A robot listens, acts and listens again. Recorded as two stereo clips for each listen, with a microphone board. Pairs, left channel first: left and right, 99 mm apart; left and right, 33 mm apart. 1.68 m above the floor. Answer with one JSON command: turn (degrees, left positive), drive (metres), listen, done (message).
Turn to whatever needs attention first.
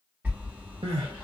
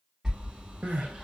{"turn": -70}
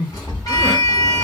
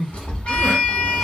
{"turn": -10}
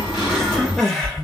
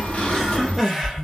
{"done": "Found it: crying, straight ahead, 1 to 2 m away."}